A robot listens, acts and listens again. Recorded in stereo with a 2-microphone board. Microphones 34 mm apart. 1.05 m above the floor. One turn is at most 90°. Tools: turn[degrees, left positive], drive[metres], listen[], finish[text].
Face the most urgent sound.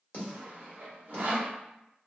Action: listen[]
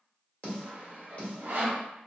Action: listen[]
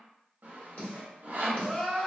Action: turn[30]
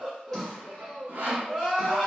Thought: So it is at 25° right.
Action: turn[-25]
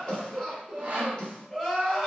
Action: finish[Found it: crying, straight ahead, 1 to 2 m away.]